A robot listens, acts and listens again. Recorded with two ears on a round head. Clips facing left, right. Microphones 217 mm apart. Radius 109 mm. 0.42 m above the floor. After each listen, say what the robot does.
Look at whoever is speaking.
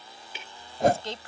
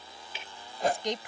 Turn 15° right.
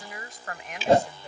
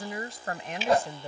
Turn 150° right.
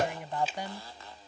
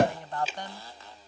Turn 10° left.
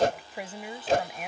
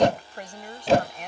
Found it: a woman speaking, straight ahead.